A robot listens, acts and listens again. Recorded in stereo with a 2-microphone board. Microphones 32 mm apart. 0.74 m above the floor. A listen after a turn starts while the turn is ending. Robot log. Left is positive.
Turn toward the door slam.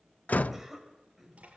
note: The door slam: about 65° left or 115° left.
cmd yaw +65
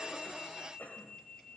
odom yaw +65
cmd idle
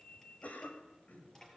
end: I heard a door slam, but can't make it out now. It was about straight ahead or 50° left.